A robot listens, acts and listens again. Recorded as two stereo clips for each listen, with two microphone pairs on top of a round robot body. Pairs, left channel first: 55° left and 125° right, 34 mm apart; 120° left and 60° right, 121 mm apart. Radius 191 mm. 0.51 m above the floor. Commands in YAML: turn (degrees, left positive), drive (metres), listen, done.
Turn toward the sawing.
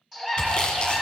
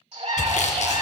turn: 120
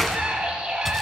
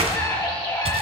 turn: -25
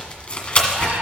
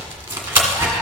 done: "Found it: sawing, straight ahead."